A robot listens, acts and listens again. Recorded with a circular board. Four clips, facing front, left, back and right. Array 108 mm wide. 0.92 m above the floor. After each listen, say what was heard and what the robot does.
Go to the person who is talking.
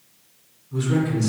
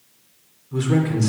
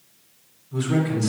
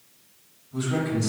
The man speaking: 90° left. Turn 90° left.
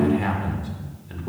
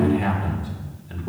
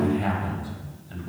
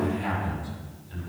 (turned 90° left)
The man speaking is now 35° left. Turn 35° left.
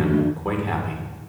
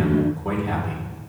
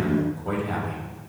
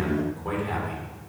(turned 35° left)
Drive 1.0 m forward.
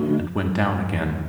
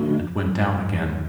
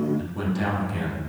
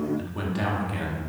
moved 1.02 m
The man speaking is now 20° left. Turn 20° left.
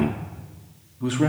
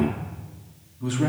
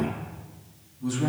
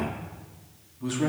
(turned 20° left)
Drive 1.0 m forward.
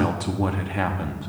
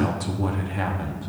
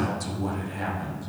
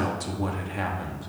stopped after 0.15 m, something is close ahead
Arrived at the man speaking, straight ahead.